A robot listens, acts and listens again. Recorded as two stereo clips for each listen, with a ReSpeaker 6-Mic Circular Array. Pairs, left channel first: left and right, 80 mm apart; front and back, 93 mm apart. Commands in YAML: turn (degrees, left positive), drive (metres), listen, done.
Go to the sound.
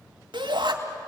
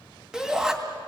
turn: -95
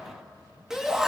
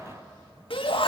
drive: 1.0
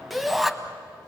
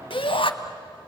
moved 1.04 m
drive: 1.0
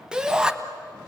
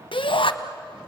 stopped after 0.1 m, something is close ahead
turn: -10
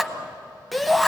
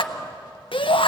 done: "Arrived at the shout, straight ahead."